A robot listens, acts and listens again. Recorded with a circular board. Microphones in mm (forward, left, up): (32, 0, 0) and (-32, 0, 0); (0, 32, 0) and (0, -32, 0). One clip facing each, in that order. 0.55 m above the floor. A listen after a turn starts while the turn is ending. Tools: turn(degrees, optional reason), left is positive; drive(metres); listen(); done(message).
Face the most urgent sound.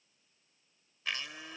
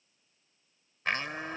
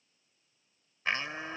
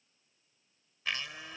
listen()
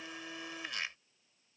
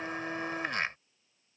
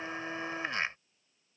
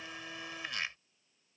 listen()
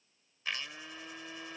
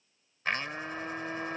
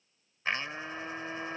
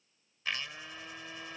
done("I can't make out anything urgent to turn to.")